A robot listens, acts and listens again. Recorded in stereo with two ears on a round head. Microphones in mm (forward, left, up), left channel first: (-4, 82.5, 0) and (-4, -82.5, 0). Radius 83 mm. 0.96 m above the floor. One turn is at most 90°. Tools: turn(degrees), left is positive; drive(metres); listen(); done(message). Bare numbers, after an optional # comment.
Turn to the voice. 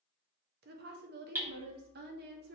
# The woman speaking: about 55° right or 125° right.
turn(-55)
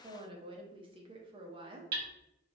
# So it is at 35° right.
turn(-35)
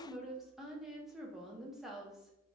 done("Found it: a woman speaking, straight ahead.")